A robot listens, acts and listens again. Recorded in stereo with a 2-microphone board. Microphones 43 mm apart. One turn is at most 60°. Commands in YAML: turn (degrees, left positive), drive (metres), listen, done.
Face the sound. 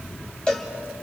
turn: 20
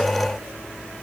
listen: true
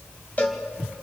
turn: 60
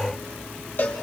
turn: 60
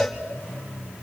done: "Facing the cowbell, 2 to 4 m away."